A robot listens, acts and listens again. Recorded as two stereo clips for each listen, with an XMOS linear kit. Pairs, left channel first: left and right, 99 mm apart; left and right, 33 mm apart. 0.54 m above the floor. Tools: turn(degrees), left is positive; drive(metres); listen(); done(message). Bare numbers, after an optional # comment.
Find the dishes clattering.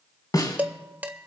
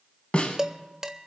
# The dishes clattering: about 20° right or 160° right.
turn(-20)
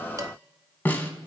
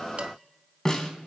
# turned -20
listen()
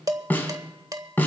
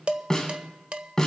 # So it is at 140° right.
turn(-140)
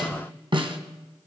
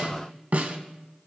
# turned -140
listen()
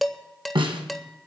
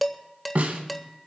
done("Facing the dishes clattering.")